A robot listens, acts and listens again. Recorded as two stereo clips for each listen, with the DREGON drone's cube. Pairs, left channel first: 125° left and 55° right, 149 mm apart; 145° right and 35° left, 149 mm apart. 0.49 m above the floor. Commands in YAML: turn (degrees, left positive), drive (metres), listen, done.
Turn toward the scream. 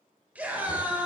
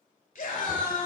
turn: -135
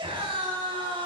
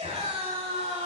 done: "Facing the scream."